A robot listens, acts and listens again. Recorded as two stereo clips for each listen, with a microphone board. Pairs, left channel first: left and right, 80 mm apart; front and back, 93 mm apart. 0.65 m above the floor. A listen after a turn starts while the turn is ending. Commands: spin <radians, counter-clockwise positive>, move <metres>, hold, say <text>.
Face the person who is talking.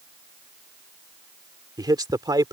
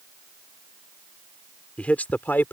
spin -1.13
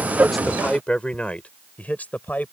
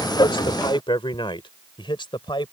spin 0.44
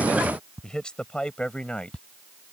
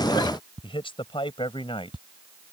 spin 0.26
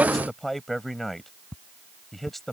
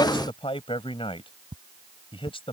say Facing the man speaking.